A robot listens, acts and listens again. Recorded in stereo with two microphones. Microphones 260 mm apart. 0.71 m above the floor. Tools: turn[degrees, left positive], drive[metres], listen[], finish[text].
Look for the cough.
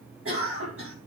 Thought: The cough: about 50° right or 130° right.
Action: turn[-50]
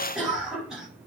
Action: finish[Found it: a cough, straight ahead.]